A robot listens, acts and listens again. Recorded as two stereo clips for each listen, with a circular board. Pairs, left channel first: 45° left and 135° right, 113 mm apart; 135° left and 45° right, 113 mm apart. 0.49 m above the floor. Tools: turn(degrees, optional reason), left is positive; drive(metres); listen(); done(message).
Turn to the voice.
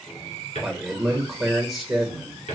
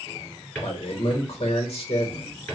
turn(degrees=135, reason="The man speaking: 135° left.")
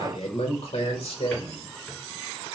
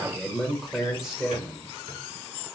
turn(degrees=40, reason="The man speaking is now 40° left.")
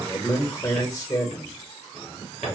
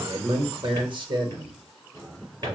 turn(degrees=-10, reason="The man speaking is now 10° right.")
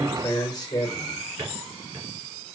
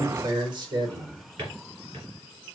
done("Found it: a man speaking, straight ahead, 1 to 2 m away.")